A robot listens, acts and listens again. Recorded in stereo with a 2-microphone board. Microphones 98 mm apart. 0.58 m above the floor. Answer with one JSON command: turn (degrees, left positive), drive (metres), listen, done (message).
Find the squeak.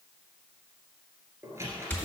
{"turn": -30}
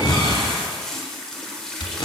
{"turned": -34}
{"listen": true}
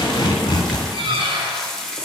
{"turn": -115}
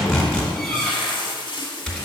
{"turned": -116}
{"done": "Found it: a squeak, straight ahead."}